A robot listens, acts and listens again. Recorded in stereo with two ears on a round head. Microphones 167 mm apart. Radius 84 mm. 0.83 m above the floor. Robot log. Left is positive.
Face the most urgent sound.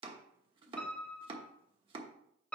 cmd idle
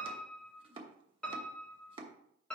cmd idle
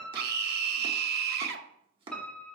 note: The scream: about 60° right or 120° right.
cmd yaw -60
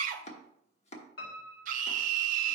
note: So it is at 50° right.
cmd yaw -50
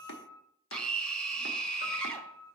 end: Found it: a scream, straight ahead, 1 to 2 m away.